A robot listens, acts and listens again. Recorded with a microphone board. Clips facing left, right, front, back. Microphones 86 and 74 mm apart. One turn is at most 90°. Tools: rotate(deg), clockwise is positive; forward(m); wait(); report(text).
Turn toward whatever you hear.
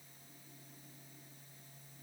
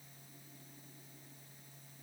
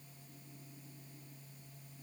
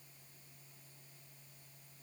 wait()
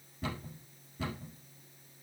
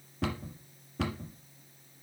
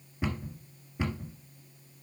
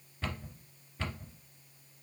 rotate(75)
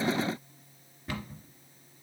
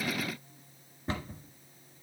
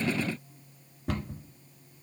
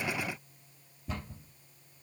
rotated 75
rotate(25)
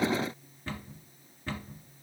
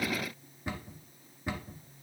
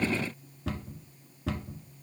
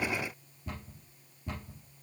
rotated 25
rotate(15)
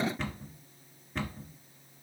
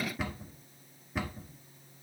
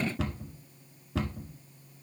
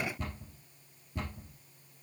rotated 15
report("Found it: a cupboard door, straight ahead, 1 to 2 m away.")